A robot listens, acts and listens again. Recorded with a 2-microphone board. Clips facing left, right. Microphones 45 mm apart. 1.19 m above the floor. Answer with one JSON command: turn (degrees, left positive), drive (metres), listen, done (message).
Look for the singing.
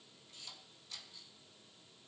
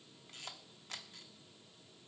{"listen": true}
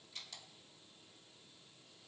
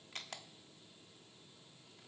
{"listen": true}
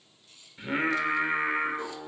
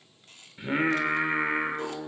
{"turn": -30}
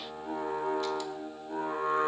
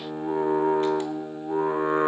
{"turn": -145}
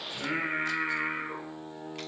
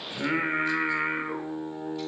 {"turn": -20}
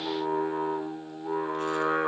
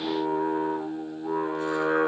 {"done": "Facing the singing, 1 to 2 m away."}